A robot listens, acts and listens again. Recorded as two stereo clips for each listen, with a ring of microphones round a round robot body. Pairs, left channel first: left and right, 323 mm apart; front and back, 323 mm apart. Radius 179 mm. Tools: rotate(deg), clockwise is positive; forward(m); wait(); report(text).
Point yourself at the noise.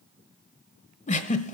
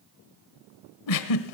rotate(-25)
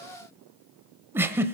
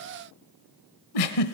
rotate(10)
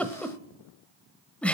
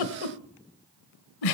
report("Facing the giggle, 1 to 2 m away.")